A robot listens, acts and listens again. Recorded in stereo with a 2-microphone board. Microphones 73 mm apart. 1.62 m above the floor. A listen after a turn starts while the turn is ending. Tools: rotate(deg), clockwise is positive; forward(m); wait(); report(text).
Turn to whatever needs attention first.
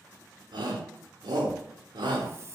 rotate(90)
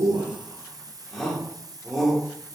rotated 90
report("Facing the shout.")